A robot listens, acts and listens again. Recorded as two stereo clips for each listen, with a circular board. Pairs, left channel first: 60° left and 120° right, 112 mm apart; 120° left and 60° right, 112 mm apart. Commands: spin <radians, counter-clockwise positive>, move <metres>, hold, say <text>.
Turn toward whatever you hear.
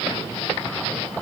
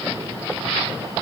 hold
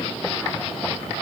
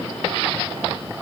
hold
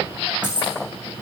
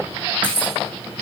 spin -2.88
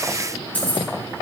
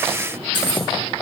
spin -0.26
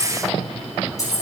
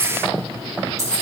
say Found it: keys jangling, straight ahead.